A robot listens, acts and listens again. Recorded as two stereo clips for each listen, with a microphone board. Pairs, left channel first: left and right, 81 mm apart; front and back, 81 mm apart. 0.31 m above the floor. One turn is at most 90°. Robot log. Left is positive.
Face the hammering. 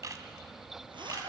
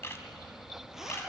cmd idle
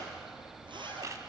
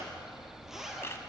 cmd idle
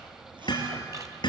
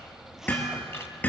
note: The hammering: 70° left.
cmd yaw +70
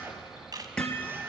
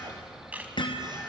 note: The hammering is now 15° left.
cmd yaw +15
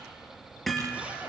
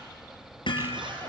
end: Facing the hammering, 2 to 4 m away.